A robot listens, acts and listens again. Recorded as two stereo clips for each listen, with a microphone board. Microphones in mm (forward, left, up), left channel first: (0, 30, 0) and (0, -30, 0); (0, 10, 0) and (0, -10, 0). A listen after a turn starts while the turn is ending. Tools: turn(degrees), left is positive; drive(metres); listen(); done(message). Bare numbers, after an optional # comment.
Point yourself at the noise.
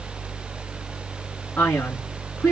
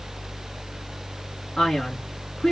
# The man speaking: about 30° left or 150° left.
turn(30)
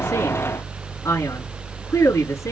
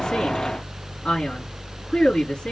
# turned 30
# So it is at 120° left.
turn(120)
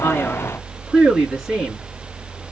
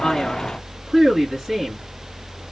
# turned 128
# The man speaking is now 10° right.
turn(-10)
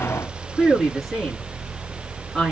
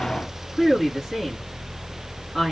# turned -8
done("Found it: a man speaking, straight ahead.")